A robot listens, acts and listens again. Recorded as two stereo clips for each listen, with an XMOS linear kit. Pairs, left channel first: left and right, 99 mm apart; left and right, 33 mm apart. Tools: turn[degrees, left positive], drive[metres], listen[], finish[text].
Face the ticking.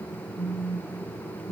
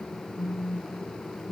Action: listen[]
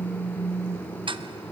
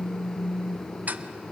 Thought: The ticking: about 60° right or 120° right.
Action: turn[-60]
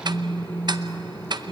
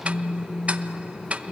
Thought: So it is at 50° right.
Action: turn[-50]
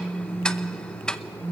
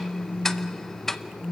Thought: The ticking is now 10° left.
Action: turn[10]
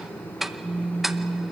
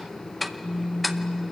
Action: finish[Found it: ticking, straight ahead, under 1 m away.]